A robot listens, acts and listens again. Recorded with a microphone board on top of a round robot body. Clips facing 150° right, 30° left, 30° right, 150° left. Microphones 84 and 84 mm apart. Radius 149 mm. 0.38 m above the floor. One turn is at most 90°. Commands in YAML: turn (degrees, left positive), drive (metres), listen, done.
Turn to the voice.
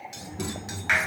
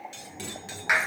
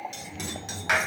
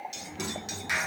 turn: -90
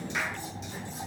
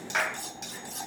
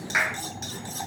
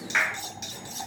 turn: -70
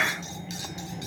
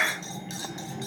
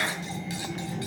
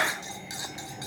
done: "Facing the child speaking, over 4 m away."